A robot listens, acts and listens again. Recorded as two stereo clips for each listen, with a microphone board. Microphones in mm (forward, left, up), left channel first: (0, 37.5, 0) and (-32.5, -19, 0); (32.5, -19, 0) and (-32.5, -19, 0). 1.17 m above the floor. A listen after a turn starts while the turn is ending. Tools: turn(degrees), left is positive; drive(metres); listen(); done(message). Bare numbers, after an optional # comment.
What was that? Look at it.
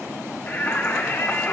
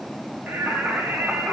# The singing: 120° left.
turn(120)
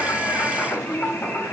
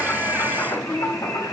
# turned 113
done("Found it: singing, straight ahead.")